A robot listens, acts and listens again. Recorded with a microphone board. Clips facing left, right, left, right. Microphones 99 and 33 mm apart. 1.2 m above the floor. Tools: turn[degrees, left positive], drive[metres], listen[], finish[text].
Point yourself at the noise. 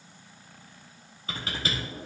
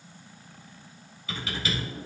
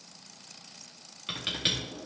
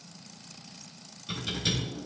Thought: The typing on a keyboard: about 40° left or 140° left.
Action: turn[40]
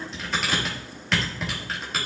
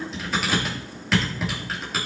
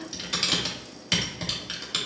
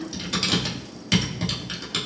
Action: finish[Facing the typing on a keyboard, 1 to 2 m away.]